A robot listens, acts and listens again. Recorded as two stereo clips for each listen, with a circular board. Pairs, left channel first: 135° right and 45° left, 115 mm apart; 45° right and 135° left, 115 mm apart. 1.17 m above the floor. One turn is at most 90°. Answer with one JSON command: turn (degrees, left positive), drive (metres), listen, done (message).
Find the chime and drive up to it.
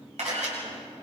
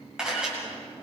{"listen": true}
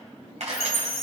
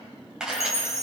{"turn": 20}
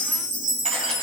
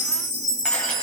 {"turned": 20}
{"drive": 1.0}
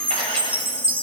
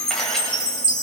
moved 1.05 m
{"drive": 1.0}
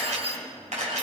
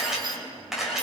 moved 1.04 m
{"listen": true}
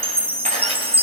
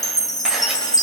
{"turn": 10}
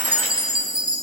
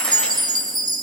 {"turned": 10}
{"drive": 1.0}
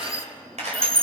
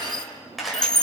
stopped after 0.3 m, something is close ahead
{"done": "I am next to the chime."}